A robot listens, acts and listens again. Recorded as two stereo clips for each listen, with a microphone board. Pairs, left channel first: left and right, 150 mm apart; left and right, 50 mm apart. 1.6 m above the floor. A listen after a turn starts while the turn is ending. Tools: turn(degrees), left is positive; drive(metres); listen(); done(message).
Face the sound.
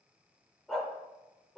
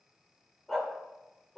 turn(degrees=30)
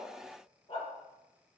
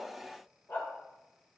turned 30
turn(degrees=140)
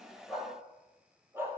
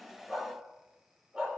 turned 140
turn(degrees=-15)
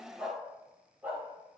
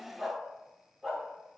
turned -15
turn(degrees=-10)
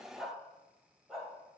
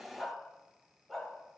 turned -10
done("Found it: a dog barking, straight ahead.")